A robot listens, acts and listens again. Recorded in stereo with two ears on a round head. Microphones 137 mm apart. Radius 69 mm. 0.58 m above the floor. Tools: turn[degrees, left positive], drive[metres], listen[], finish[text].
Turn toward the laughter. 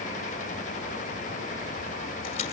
Action: listen[]
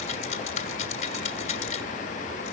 Action: listen[]
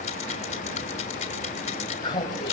Thought: The laughter: about 30° left or 150° left.
Action: turn[30]
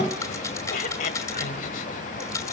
Thought: So it is at 120° left.
Action: turn[120]
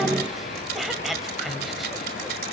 Action: finish[Found it: laughter, straight ahead.]